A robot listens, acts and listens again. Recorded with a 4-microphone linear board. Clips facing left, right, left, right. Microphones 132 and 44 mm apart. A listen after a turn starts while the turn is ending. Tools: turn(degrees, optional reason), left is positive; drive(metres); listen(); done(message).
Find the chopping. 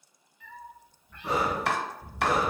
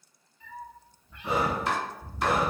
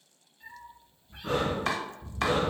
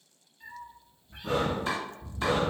turn(degrees=70, reason="The chopping: about 70° left or 110° left.")
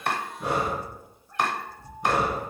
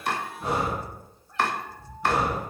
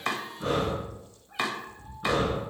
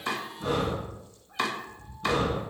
turn(degrees=15, reason="So it is at 15° left.")
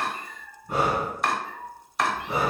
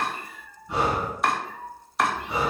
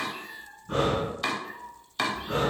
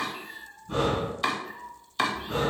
done("Facing the chopping, under 1 m away.")